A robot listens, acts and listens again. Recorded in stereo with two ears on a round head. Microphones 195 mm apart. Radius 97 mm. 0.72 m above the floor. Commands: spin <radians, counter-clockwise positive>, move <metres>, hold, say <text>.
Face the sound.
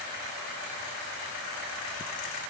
hold
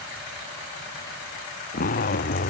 spin 0.70
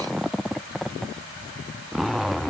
say Facing the zipper.